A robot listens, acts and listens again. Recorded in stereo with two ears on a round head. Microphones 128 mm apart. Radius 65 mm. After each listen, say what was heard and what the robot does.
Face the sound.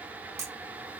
The camera shutter: about 20° right or 160° right. Turn 20° right.
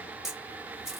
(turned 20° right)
Found it: a camera shutter, straight ahead, under 1 m away.